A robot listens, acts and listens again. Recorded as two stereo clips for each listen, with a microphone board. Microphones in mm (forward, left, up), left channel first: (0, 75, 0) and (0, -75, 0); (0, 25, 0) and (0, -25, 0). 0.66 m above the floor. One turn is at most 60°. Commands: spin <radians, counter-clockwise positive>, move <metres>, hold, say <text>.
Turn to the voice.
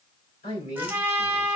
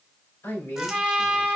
spin 1.05
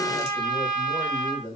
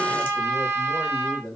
spin 0.35
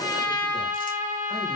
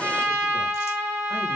hold
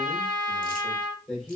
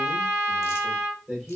say Facing the man speaking.